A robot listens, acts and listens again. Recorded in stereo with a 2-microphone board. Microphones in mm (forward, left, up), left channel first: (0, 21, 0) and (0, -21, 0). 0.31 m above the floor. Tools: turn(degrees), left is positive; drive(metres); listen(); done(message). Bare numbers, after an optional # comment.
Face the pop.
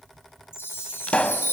# The pop: about 25° left or 155° left.
turn(25)
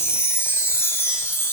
listen()
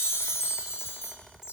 done("I heard a pop, but can't make it out now. It was about straight ahead or 130° left.")